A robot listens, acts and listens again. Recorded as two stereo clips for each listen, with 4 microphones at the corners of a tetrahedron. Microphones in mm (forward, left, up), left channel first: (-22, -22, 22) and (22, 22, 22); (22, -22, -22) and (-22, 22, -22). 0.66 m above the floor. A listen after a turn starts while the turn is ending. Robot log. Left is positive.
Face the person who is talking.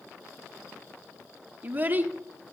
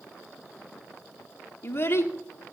end: Facing the child speaking.